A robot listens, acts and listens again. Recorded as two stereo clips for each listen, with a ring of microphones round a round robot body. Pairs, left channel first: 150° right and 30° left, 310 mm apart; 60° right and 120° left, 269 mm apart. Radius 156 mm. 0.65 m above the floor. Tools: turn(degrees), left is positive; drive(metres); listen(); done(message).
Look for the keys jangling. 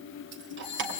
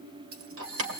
turn(degrees=85)
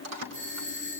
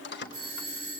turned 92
turn(degrees=-10)
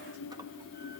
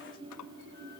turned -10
listen()
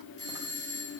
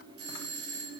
listen()
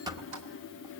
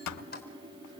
done("Facing the keys jangling, 2 to 4 m away.")